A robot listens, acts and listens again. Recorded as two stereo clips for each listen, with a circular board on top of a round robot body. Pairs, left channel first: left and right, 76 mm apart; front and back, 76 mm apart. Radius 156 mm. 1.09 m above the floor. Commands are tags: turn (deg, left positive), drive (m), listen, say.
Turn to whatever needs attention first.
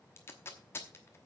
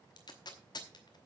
<listen/>
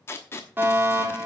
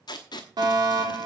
<turn deg="-155"/>
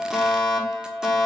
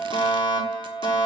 <say>Facing the fire alarm, over 4 m away.</say>